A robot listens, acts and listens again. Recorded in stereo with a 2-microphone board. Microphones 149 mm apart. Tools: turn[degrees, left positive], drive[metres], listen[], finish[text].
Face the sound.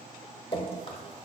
Thought: The dripping: about 40° left or 140° left.
Action: turn[40]
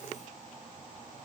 Action: listen[]
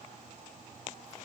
Action: listen[]
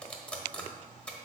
Thought: So it is at 10° left.
Action: turn[10]
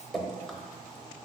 Action: finish[Facing the dripping, under 1 m away.]